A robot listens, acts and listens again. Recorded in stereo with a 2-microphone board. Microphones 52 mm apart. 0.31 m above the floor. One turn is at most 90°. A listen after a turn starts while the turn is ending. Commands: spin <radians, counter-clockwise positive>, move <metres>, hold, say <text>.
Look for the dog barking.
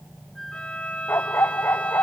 spin 0.96
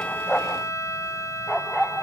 say Found it: a dog barking, straight ahead.